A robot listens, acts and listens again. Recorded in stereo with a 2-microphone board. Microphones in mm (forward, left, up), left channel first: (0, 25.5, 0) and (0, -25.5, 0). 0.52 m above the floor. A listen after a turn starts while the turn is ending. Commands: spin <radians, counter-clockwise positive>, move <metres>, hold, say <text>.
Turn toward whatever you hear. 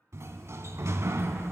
spin -1.13
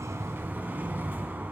spin -0.70
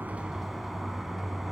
say Found it: a sliding door, straight ahead.